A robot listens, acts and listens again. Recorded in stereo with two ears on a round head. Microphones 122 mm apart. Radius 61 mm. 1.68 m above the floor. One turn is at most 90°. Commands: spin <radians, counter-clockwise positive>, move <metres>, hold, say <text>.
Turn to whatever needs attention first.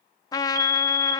spin -1.57
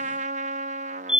say Found it: a fire alarm, straight ahead.